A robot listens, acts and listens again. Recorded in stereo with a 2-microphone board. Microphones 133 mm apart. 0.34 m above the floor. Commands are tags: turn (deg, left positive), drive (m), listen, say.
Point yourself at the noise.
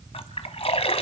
<turn deg="50"/>
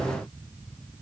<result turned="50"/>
<listen/>
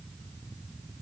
<say>I heard a splash, but can't make it out now. It was about straight ahead or 80° left.</say>